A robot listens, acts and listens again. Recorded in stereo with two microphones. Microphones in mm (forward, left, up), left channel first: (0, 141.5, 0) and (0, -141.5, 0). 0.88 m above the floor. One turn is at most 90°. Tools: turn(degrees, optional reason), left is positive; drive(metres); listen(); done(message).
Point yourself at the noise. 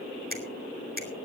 turn(degrees=-35, reason="The finger snap: about 35° right or 145° right.")
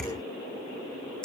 done("Found it: a finger snap, straight ahead.")